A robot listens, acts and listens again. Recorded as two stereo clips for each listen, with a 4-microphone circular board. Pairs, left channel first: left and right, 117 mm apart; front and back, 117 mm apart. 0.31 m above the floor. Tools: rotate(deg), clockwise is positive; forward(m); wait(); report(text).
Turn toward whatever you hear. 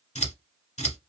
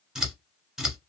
rotate(-95)
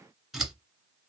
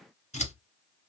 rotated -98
report("Facing the scissors, 1 to 2 m away.")